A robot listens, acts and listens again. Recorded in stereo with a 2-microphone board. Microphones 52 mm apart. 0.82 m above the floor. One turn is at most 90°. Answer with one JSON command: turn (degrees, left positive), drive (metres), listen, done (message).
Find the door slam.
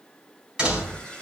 {"turn": -15}
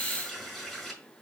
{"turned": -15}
{"listen": true}
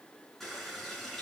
{"done": "I heard a door slam, but can't make it out now. It was about straight ahead or 150° right."}